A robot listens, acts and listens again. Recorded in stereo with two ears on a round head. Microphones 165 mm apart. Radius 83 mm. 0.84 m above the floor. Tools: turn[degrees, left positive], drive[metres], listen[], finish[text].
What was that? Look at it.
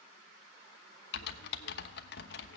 Thought: The typing on a keyboard: about 60° left or 120° left.
Action: turn[60]
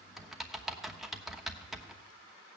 Action: finish[Facing the typing on a keyboard.]